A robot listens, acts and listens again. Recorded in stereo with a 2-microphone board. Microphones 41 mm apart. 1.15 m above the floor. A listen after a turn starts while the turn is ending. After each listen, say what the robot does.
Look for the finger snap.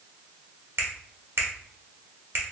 Turn 60° right.
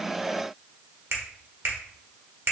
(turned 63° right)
Turn 60° right.
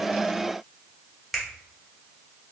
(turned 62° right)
Found it: a finger snap, straight ahead, 1 to 2 m away.